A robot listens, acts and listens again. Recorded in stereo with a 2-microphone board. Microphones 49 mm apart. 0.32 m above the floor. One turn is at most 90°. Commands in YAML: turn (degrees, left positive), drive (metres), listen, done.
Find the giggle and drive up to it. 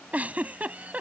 turn: -30
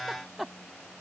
drive: 1.0
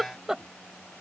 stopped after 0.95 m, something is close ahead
turn: -15
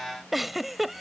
done: "I am next to the giggle."